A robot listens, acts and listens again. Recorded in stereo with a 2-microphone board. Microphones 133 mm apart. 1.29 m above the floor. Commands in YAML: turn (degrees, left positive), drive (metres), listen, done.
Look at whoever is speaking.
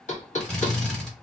listen: true
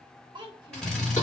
turn: -35
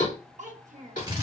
turn: -110
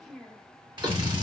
done: "Facing the child speaking, under 1 m away."